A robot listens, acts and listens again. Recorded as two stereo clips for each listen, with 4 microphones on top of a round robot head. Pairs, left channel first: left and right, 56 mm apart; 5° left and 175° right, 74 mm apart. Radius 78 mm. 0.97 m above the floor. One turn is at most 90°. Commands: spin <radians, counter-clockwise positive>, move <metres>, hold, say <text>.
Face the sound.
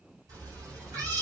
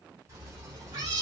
spin -1.57
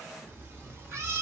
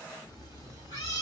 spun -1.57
spin -0.96
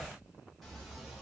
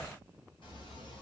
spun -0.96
hold
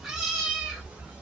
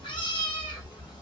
spin -0.35
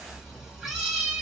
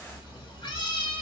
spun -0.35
spin -0.17
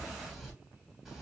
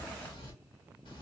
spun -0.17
say Facing the cat meowing, 1 to 2 m away.